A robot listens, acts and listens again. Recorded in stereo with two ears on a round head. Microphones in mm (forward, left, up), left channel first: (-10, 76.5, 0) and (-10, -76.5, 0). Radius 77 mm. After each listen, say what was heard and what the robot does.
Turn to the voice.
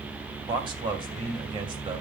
The man speaking: about 30° right or 150° right. Turn 30° right.
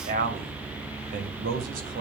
So it is at 115° right. Turn 115° right.
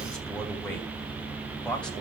Facing the man speaking.